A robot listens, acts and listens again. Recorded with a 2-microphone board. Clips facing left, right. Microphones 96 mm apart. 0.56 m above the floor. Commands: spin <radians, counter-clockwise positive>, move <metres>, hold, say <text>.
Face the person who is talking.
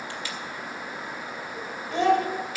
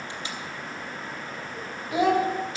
spin -0.52
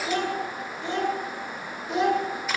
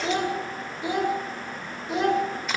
spin 0.52
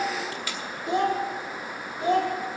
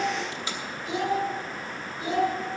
spin 2.09
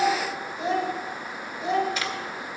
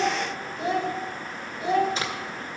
say Facing the child speaking.